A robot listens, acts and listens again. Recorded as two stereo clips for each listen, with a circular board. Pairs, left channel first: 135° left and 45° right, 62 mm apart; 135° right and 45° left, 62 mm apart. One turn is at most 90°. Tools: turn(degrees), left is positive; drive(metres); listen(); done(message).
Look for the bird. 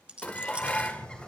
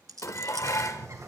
turn(degrees=65)
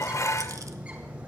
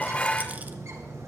turn(degrees=20)
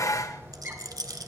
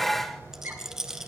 done("Facing the bird.")